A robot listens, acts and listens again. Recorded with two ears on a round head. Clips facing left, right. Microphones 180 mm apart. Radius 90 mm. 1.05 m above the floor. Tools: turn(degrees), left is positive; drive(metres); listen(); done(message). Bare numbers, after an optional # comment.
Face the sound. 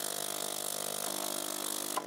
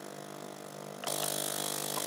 listen()
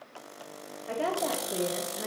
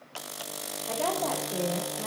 # The woman speaking: about 25° left or 155° left.
turn(25)
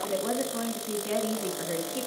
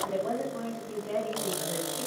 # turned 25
# So it is at 100° left.
turn(100)
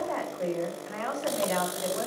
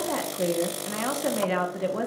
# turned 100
# The woman speaking is now 45° right.
turn(-45)
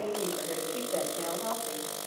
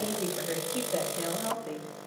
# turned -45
# The woman speaking is now 15° right.
turn(-15)
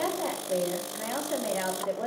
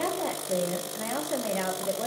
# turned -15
done("Found it: a woman speaking, straight ahead.")